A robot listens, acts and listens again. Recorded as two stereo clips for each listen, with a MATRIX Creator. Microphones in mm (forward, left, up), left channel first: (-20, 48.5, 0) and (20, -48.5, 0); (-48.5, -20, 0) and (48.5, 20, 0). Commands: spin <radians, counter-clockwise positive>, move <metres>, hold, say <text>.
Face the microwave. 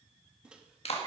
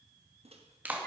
spin 0.26
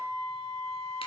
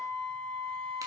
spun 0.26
hold
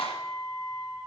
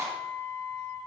hold
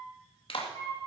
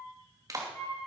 say I heard a microwave from this way, but can't make it out now.